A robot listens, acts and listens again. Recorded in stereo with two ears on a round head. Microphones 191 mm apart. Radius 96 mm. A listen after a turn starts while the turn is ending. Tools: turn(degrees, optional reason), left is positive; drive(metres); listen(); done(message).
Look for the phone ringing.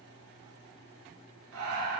listen()
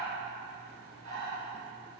listen()
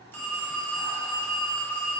turn(degrees=30)
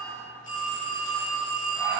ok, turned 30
turn(degrees=135, reason="So it is at 135° left.")
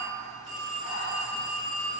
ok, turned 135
done("Found it: a phone ringing, straight ahead, 1 to 2 m away.")